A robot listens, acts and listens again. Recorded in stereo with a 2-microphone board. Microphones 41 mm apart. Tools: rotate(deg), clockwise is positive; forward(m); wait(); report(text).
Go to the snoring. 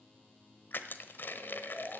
rotate(-35)
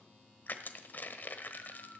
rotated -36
wait()
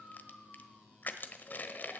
rotate(-105)
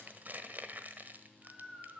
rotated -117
rotate(10)
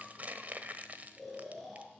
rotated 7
forward(1.0)
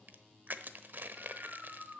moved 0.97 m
forward(1.0)
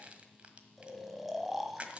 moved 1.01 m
forward(1.0)
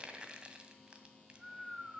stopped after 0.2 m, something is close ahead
report("I am next to the snoring.")